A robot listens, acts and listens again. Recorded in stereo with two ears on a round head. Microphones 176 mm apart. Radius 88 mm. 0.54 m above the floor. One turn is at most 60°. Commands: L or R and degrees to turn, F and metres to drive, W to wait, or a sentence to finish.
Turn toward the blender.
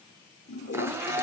R30
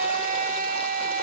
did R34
R60
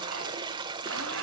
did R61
R60
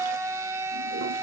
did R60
R15
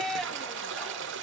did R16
Facing the blender, 1 to 2 m away.